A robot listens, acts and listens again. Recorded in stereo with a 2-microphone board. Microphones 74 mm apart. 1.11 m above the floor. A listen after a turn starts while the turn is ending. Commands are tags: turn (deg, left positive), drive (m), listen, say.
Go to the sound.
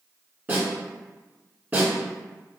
<turn deg="-25"/>
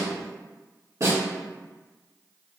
<turn deg="-130"/>
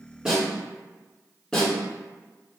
<turn deg="15"/>
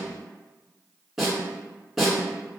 <drive m="1.0"/>
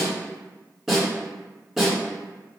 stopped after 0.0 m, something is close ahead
<say>Something is in my way. I am facing the snare drum but have not reached it.</say>